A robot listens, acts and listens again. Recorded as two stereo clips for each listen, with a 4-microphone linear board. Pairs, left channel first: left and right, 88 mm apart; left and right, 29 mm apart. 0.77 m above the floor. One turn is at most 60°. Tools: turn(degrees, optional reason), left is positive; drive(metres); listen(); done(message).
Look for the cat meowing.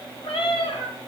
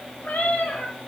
turn(degrees=60, reason="The cat meowing: about 75° left or 105° left.")
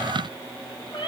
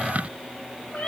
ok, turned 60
turn(degrees=60, reason="So it is at 60° left.")
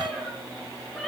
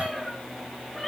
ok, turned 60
done("Found it: a cat meowing, straight ahead, 2 to 4 m away.")